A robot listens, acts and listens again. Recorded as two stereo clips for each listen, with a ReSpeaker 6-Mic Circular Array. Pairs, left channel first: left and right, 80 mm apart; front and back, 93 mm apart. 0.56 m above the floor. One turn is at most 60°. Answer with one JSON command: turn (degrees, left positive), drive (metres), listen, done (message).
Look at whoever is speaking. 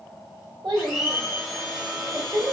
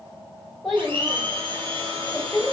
{"turn": -60}
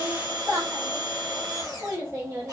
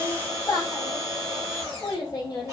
{"turn": -35}
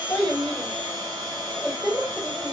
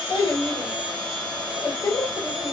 {"done": "Facing the child speaking, 1 to 2 m away."}